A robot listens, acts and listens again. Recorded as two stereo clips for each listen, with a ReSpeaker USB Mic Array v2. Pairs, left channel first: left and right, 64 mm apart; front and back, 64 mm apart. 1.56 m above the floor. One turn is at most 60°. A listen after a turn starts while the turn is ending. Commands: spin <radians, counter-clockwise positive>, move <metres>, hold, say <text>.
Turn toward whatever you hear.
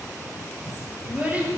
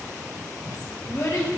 spin -0.44
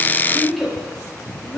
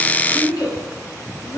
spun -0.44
say Facing the child speaking, over 4 m away.